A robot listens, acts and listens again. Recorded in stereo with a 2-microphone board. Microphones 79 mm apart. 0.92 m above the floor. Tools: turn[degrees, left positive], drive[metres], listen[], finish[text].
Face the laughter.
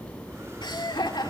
Thought: The laughter: about 70° left or 110° left.
Action: turn[70]
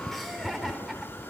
Action: finish[Found it: laughter, straight ahead, over 4 m away.]